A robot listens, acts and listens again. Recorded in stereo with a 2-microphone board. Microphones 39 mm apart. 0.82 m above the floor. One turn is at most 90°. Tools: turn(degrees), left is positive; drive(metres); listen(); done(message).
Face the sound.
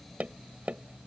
turn(degrees=-40)
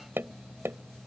turn(degrees=-90)
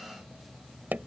turn(degrees=-50)
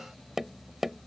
done("Facing the tapping.")